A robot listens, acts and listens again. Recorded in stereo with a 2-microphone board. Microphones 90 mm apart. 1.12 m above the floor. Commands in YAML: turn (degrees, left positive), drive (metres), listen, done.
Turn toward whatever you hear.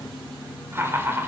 turn: -25
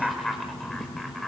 done: "Facing the laughter, over 4 m away."